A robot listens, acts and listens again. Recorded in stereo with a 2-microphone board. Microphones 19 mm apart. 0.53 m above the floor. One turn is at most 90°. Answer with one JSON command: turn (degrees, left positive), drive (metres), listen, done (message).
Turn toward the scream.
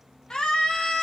{"turn": 55}
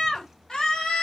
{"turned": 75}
{"turn": 45}
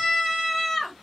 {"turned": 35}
{"turn": 10}
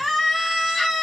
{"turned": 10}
{"done": "Facing the scream, 1 to 2 m away."}